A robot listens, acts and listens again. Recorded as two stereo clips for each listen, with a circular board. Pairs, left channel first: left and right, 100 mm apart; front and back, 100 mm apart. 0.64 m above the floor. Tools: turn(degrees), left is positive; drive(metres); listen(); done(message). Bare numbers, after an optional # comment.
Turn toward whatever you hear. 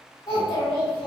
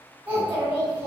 # The child speaking: 120° left.
turn(120)
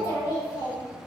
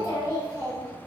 # The child speaking is now 50° left.
turn(50)
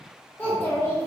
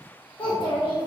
# The child speaking is now 35° left.
turn(35)
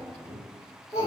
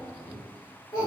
# The child speaking is now 35° left.
turn(35)
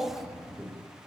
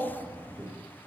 done("Found it: a child speaking, straight ahead.")